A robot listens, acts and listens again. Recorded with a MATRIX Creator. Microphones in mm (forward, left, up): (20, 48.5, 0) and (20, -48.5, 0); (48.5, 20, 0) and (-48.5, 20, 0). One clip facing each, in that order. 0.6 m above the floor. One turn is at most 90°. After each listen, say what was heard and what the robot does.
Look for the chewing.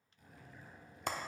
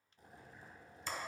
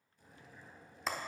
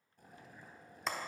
Keep listening.
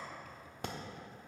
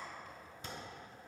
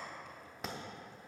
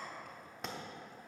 Keep listening.
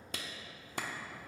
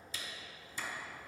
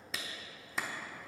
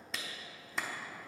I can't make out chewing to turn to.